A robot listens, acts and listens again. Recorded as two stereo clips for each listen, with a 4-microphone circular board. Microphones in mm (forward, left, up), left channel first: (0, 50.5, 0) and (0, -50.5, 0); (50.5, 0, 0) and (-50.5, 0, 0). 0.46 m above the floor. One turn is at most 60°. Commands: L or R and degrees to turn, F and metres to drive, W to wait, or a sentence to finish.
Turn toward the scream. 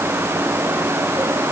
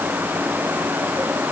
W
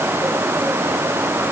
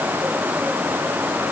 W
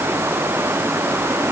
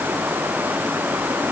I can't make out a scream.